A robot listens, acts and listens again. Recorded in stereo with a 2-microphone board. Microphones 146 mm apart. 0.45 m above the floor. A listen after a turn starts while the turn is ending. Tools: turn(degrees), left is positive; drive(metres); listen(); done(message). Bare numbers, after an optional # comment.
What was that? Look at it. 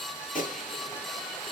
# The gunshot: about 70° left or 110° left.
turn(70)
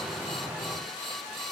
listen()
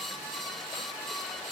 done("I heard a gunshot, but can't make it out now. It was about straight ahead or 40° left.")